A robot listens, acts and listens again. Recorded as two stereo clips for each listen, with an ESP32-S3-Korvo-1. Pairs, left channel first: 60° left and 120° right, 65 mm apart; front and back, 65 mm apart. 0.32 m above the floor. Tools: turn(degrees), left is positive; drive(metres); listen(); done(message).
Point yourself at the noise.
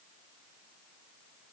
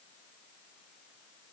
listen()
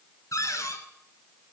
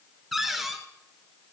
turn(degrees=95)
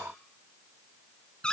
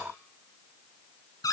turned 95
turn(degrees=-15)
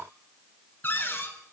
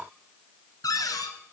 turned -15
done("Found it: a cupboard door, straight ahead, 1 to 2 m away.")